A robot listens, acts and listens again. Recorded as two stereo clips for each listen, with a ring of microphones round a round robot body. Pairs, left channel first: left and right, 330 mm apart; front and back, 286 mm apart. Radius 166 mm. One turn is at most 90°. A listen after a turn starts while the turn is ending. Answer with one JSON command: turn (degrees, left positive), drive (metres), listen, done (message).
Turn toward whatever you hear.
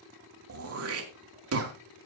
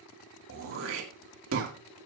{"turn": -90}
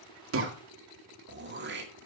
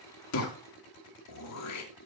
{"turn": -35}
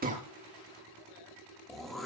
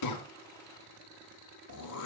{"done": "Found it: throat clearing, straight ahead, 2 to 4 m away."}